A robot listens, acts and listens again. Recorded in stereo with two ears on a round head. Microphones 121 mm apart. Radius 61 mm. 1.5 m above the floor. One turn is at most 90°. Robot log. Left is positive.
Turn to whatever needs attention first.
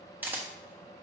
cmd idle
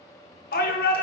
cmd yaw +90
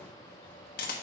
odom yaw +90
cmd idle
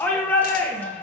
note: The shout is now 15° left.
cmd yaw +15
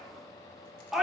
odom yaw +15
end: Found it: a shout, straight ahead, 1 to 2 m away.